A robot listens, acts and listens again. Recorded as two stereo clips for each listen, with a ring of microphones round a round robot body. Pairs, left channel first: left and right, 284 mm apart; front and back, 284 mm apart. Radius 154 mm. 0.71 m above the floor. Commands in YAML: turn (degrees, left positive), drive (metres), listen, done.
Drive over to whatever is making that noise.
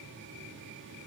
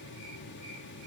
listen: true
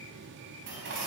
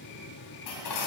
turn: -35
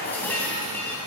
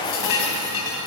drive: 1.0
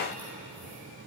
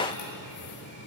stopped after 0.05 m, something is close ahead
done: "Blocked. The dishes clattering is further on, straight ahead."